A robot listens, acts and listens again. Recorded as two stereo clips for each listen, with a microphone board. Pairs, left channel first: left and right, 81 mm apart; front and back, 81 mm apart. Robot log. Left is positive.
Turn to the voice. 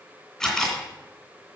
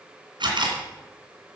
cmd idle
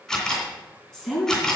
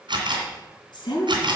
end: Facing the woman speaking.